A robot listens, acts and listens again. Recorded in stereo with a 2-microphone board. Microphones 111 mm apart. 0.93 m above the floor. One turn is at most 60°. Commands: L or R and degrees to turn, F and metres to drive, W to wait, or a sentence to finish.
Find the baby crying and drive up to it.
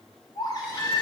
L35
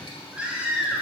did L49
R10
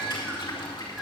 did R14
W
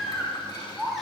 F1.0
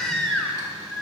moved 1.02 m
F1.0
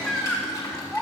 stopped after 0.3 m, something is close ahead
I am next to the baby crying.